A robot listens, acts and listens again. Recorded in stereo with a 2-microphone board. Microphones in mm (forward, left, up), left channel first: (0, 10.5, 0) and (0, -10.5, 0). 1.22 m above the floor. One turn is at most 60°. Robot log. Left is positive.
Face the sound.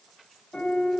note: The piano: about 65° left or 115° left.
cmd yaw +60
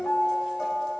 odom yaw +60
note: So it is at 55° left.
cmd yaw +55
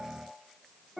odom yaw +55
end: Facing the piano, 2 to 4 m away.